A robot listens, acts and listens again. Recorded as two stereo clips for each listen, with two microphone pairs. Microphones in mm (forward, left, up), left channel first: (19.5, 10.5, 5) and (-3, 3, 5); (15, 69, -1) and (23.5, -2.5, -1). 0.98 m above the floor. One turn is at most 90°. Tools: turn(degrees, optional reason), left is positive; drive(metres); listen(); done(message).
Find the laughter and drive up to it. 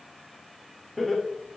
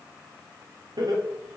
turn(degrees=-65, reason="The laughter: 65° right.")
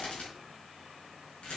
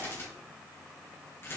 listen()
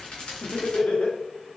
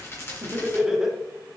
drive(metres=1.0)
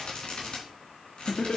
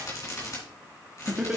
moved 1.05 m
drive(metres=1.0)
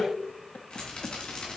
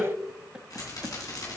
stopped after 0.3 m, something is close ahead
done("Arrived at the laughter, straight ahead.")